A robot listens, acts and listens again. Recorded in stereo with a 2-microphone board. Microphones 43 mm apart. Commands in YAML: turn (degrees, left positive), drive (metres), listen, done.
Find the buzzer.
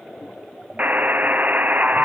turn: -40
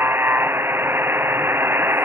turn: -100
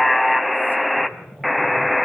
done: "Facing the buzzer."